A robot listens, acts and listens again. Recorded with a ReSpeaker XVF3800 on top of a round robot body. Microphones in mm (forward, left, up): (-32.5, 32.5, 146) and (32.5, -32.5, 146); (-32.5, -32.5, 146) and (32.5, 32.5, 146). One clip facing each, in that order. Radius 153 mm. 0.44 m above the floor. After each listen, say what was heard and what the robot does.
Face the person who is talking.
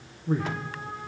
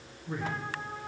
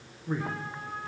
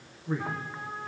The man speaking: 140° left. Turn 140° left.
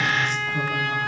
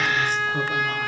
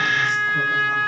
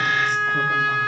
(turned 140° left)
Keep listening.
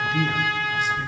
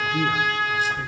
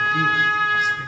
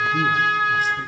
Found it: a man speaking, straight ahead.